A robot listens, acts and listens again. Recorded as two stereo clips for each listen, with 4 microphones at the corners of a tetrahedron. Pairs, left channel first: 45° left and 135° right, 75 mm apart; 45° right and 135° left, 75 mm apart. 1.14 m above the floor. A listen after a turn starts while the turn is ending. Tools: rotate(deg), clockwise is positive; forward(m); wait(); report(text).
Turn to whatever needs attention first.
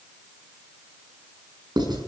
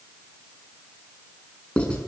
wait()
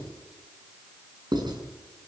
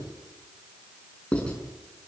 wait()
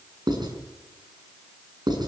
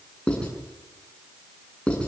report("I can't make out anything urgent to turn to.")